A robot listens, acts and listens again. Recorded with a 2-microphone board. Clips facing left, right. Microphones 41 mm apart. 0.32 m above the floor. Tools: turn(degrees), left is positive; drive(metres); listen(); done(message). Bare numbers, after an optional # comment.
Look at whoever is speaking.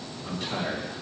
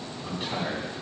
# The man speaking: about 25° right or 155° right.
turn(-25)
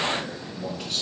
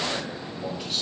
done("Found it: a man speaking, straight ahead, 2 to 4 m away.")